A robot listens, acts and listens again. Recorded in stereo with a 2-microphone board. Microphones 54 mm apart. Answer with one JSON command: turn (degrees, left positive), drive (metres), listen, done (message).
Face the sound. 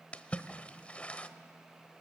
{"turn": 25}
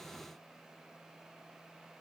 {"listen": true}
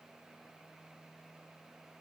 {"done": "I heard a splash, but can't make it out now. It was about straight ahead or 130° left."}